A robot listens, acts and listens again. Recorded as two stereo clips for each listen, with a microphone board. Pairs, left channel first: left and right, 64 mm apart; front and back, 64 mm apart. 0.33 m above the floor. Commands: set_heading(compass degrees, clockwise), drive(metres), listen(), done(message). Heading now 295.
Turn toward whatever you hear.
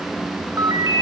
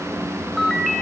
set_heading(25)
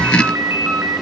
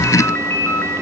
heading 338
set_heading(23)
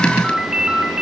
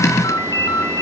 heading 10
set_heading(25)
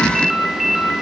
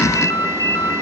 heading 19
done("Facing the ringtone, 2 to 4 m away.")